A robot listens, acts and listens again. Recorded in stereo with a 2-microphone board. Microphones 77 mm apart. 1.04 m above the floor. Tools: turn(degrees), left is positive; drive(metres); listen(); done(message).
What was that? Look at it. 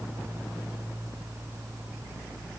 listen()
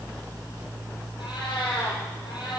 turn(degrees=90)
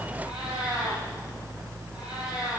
turn(degrees=-10)
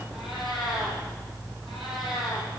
done("Found it: a cat meowing, straight ahead, over 4 m away.")